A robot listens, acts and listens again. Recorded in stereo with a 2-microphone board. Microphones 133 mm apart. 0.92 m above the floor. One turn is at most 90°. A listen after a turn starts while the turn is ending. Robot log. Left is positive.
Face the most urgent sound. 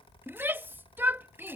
note: The shout: about 15° right or 165° right.
cmd yaw -15
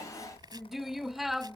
end: Facing the shout.